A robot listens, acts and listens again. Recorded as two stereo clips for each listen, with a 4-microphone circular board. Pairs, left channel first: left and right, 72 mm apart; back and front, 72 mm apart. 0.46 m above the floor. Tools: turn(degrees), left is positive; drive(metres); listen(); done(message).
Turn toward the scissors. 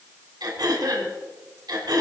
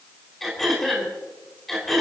listen()
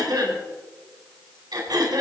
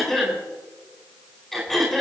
listen()
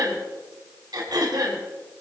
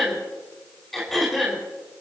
done("I can't make out scissors, only throat clearing.")